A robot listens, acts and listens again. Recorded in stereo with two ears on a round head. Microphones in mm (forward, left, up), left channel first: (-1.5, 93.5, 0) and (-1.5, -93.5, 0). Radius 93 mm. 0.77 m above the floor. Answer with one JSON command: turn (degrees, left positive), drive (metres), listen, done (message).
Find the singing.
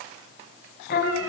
{"turn": 45}
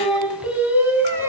{"turn": -10}
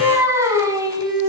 {"turn": -20}
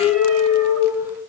{"turn": -10}
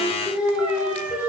{"done": "Found it: singing, straight ahead."}